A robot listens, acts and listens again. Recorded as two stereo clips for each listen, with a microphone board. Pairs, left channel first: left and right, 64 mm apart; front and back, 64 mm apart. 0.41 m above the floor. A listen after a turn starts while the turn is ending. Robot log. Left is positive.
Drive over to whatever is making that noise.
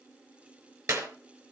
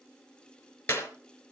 note: The clap: 60° right.
cmd yaw -60
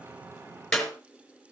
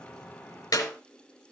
cmd fwd 1.0
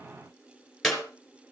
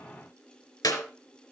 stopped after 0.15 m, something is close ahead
end: Blocked. The clap is further on, straight ahead.